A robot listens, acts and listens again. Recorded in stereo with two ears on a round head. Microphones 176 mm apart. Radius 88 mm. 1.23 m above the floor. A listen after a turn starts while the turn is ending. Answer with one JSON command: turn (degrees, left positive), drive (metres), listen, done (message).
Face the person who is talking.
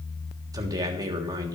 {"turn": -20}
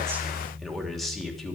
{"done": "Found it: a man speaking, straight ahead."}